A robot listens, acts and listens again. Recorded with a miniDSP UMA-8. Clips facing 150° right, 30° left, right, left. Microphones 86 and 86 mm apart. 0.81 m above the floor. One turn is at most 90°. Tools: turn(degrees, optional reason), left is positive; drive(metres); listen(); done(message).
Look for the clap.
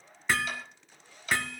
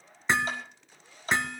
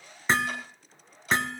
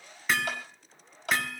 turn(degrees=80, reason="The clap: 80° left.")
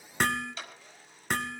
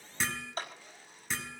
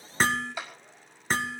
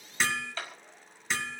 turn(degrees=-15, reason="The clap is now 15° right.")
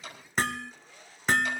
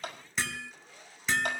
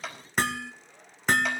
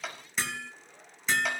done("Found it: a clap, straight ahead.")